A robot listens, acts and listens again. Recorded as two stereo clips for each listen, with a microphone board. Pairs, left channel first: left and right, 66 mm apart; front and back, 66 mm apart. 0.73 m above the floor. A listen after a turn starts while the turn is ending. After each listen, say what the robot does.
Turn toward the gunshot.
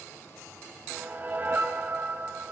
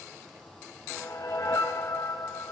Keep listening.
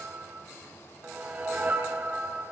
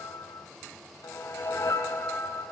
Keep listening.
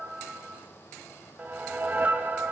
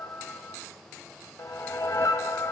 I can't make out a gunshot, only a whoosh.